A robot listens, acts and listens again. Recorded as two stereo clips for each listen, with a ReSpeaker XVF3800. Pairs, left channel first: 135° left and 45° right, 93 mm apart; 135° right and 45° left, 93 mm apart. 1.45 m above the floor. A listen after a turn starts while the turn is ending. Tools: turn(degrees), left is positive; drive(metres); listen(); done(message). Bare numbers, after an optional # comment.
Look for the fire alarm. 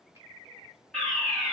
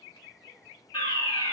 # The fire alarm: 140° right.
turn(-140)
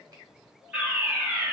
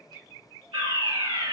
# The fire alarm is now 35° left.
turn(35)
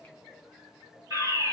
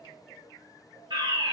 # The fire alarm is now 10° left.
turn(10)
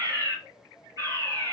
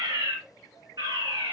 done("Facing the fire alarm, 2 to 4 m away.")